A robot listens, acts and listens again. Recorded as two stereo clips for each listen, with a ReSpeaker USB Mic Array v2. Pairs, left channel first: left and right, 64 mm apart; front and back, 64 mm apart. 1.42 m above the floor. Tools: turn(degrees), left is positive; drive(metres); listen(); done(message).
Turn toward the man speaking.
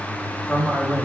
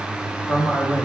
turn(degrees=-170)
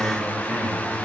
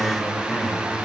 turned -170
listen()
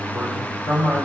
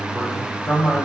turn(degrees=45)
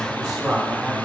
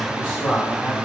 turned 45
turn(degrees=10)
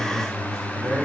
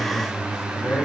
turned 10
done("Found it: a man speaking, straight ahead, 2 to 4 m away.")